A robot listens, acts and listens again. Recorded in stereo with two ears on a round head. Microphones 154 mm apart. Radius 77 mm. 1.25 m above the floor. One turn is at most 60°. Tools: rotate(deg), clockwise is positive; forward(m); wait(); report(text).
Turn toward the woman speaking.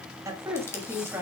rotate(30)
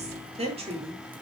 rotate(60)
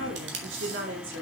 rotate(60)
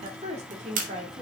rotate(40)
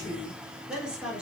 report("Facing the woman speaking, 2 to 4 m away.")